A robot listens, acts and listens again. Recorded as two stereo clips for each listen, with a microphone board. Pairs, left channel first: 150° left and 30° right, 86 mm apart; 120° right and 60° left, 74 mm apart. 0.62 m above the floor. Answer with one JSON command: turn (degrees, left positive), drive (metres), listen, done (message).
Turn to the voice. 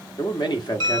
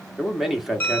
{"turn": 150}
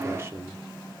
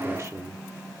{"turn": 25}
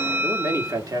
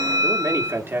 {"turn": 10}
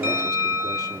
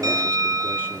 {"listen": true}
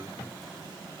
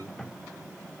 {"listen": true}
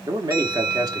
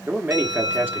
{"done": "Found it: a man speaking, straight ahead."}